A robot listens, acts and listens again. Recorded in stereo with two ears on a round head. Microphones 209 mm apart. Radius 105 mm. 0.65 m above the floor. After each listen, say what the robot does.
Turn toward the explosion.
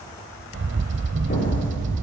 Turn 35° left.
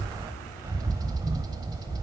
Keep listening.
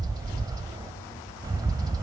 I heard an explosion, but can't make it out now. It was about straight ahead or 110° left.